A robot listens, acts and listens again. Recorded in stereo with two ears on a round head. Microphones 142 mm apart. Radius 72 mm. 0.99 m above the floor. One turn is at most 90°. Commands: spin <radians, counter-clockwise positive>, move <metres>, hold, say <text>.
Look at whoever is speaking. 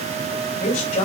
spin 0.87
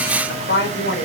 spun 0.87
spin 1.31
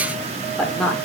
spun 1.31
say Found it: a woman speaking, straight ahead.